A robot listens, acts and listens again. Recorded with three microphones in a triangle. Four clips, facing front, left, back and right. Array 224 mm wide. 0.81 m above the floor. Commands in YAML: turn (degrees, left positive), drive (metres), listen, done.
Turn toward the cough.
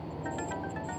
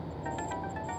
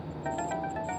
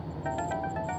listen: true
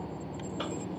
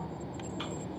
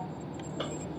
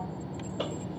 turn: -90
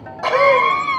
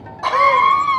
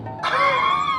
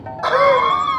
turn: -40
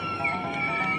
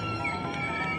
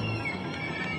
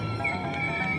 done: "Found it: a cough, straight ahead."